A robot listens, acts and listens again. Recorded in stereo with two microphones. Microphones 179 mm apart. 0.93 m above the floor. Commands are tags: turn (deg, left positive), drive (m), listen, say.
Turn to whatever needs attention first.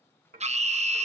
<turn deg="-40"/>
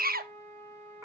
<turn deg="-90"/>
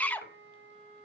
<turn deg="10"/>
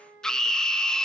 <say>Found it: a scream, straight ahead.</say>